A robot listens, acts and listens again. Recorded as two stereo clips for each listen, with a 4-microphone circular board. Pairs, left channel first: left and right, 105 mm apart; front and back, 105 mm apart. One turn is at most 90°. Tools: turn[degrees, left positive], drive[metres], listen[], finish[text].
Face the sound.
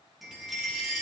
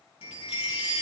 Action: finish[Found it: a chime, straight ahead, 2 to 4 m away.]